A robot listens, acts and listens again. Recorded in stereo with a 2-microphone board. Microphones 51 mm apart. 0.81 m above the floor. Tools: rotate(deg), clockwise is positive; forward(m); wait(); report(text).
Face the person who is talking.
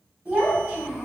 rotate(20)
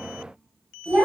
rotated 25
rotate(135)
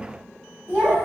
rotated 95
rotate(40)
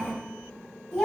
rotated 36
report("Facing the child speaking, 1 to 2 m away.")